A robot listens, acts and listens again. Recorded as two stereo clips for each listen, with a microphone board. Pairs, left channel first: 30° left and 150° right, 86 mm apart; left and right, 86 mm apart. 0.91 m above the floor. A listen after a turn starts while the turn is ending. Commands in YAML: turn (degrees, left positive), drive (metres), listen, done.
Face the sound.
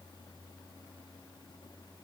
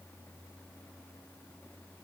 listen: true
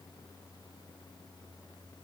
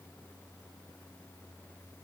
listen: true
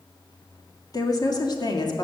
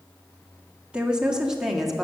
done: "Found it: a woman speaking, straight ahead."